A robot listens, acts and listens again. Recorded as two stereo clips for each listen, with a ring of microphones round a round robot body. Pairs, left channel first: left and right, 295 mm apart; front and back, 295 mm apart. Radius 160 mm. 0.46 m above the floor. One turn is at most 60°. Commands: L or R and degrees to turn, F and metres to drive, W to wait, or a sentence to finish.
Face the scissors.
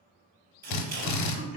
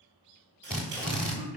R60
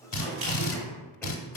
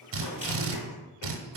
R60
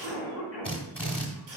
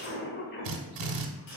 R35
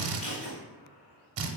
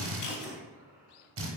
W
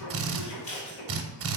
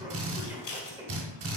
L20
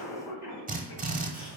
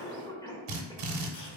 W
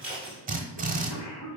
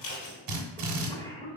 Facing the scissors, 1 to 2 m away.